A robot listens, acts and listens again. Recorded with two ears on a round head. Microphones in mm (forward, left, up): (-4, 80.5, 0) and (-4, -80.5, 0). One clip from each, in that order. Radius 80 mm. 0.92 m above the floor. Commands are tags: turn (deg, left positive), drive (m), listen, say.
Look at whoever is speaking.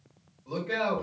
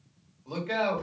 <turn deg="-35"/>
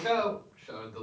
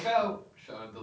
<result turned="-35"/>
<say>Facing the man speaking.</say>